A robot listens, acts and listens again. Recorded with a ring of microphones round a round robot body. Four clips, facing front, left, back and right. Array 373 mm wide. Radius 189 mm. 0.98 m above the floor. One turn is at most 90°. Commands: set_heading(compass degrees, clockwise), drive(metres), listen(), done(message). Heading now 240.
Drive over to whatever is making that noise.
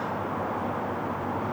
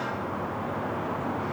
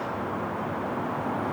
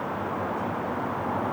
listen()
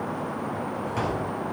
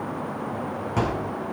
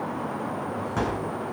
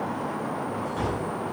set_heading(150)
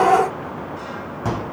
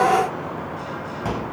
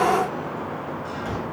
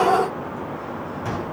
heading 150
set_heading(135)
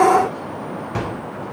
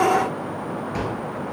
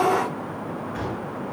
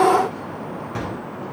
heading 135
drive(1.0)
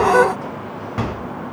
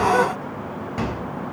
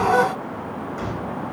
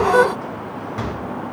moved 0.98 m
drive(1.0)
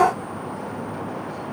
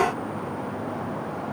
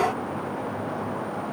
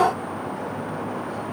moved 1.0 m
set_heading(120)
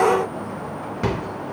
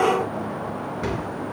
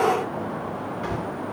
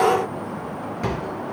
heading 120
drive(1.0)
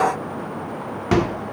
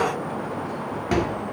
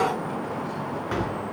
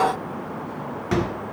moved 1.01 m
drive(1.0)
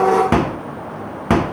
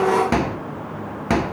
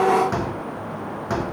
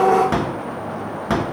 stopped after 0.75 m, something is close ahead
set_heading(110)
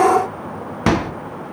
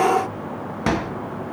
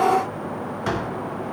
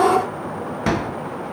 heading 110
done("Arrived at the microwave, straight ahead.")